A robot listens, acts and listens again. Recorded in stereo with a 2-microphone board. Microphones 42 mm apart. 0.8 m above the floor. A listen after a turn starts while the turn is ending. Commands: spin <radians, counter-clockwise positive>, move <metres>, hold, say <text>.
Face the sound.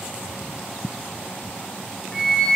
spin 0.52
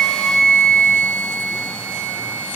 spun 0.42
spin 2.44
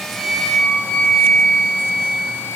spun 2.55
say Facing the flute.